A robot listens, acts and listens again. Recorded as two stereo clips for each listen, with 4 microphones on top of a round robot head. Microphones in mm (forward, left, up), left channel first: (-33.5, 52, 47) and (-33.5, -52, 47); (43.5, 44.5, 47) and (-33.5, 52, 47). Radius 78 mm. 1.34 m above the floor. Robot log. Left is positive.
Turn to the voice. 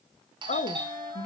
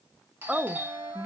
note: The woman speaking: 95° left.
cmd yaw +95
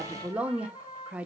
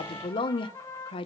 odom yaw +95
note: The woman speaking is now 10° right.
cmd yaw -10
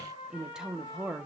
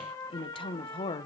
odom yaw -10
end: Found it: a woman speaking, straight ahead.